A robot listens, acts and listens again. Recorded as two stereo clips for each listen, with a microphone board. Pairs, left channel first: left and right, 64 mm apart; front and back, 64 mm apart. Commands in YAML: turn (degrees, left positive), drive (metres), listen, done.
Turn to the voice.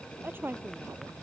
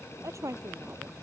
turn: -145
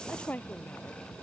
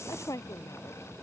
turn: 25
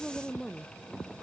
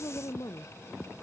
done: "Found it: a woman speaking, straight ahead."